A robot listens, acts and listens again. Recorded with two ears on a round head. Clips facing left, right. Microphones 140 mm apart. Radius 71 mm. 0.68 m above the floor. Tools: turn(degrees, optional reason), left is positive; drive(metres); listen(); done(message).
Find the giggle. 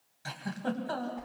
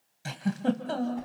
turn(degrees=-25, reason="The giggle: about 25° right or 155° right.")
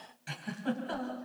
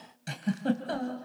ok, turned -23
turn(degrees=-130, reason="So it is at 130° right.")
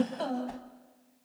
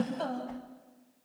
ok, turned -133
done("Found it: a giggle, straight ahead, 2 to 4 m away.")